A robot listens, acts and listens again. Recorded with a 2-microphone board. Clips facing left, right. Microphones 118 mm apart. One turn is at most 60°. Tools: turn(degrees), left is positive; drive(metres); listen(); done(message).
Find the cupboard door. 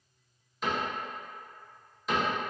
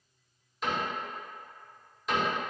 turn(degrees=30)
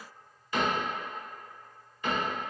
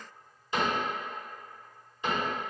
turn(degrees=-30)
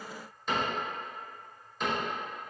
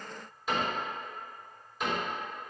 done("Facing the cupboard door.")